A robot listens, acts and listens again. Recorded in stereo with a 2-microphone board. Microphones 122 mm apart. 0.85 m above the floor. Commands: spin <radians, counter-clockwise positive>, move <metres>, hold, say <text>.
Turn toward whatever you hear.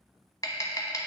spin 0.52
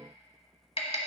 spin 2.01
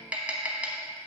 spin -0.17
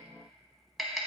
say Found it: tapping, straight ahead.